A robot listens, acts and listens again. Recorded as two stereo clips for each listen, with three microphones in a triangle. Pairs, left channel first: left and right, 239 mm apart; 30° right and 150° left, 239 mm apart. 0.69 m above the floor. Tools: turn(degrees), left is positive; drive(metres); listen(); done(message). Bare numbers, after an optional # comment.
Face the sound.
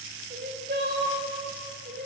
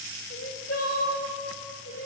# The crying: 45° right.
turn(-45)
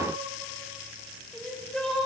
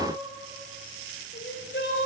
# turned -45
done("Facing the crying.")